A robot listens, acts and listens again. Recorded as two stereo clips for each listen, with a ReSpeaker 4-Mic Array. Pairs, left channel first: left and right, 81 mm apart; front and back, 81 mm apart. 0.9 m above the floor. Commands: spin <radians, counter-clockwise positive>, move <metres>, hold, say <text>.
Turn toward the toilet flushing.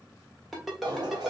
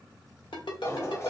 spin -1.05
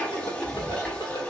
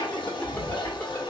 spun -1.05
spin 0.17
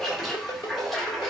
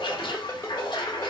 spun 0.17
say Facing the toilet flushing.